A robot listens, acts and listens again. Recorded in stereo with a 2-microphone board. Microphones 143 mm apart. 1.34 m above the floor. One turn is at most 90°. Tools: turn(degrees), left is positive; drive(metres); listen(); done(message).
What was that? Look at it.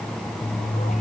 listen()
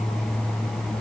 listen()
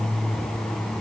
done("I can't make out anything to turn to.")